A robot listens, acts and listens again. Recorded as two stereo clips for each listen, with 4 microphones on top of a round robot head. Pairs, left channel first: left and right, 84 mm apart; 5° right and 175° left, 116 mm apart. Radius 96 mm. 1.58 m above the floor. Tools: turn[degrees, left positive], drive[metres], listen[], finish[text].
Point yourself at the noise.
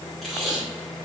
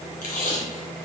Action: finish[Found it: tape being pulled, straight ahead, 1 to 2 m away.]